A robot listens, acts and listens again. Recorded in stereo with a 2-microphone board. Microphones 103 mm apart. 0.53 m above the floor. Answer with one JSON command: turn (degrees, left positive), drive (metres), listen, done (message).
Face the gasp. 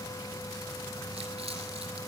{"listen": true}
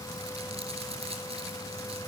{"listen": true}
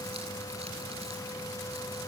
{"done": "I can't make out a gasp to turn to."}